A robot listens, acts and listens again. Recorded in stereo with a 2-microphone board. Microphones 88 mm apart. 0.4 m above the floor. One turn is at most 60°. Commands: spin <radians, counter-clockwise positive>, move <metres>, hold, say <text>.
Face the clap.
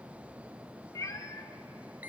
hold
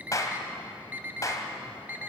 spin 0.70
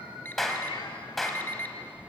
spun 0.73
say Facing the clap.